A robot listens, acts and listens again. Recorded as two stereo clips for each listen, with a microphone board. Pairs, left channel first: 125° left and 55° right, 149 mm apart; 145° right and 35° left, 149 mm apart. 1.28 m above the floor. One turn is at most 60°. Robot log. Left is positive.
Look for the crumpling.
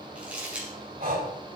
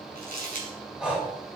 note: The crumpling: 25° left.
cmd yaw +25
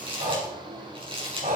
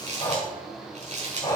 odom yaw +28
end: Facing the crumpling.